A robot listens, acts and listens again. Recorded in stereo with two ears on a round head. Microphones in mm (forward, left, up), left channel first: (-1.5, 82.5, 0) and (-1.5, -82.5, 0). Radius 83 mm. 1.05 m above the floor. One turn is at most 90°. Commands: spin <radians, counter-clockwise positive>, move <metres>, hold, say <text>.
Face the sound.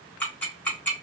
spin 0.52
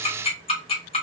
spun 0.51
spin 1.57
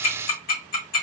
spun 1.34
spin 1.13
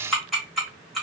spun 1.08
say Found it: ticking, straight ahead, 1 to 2 m away.